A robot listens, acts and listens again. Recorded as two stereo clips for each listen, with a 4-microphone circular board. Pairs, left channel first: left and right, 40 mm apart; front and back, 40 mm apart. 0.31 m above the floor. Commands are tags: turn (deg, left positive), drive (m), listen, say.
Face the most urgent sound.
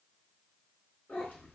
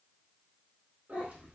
<listen/>
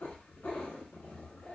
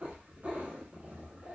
<listen/>
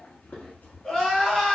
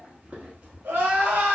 <turn deg="165"/>
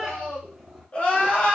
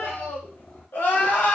<turn deg="25"/>
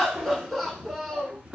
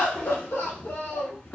<say>Found it: crying, straight ahead, under 1 m away.</say>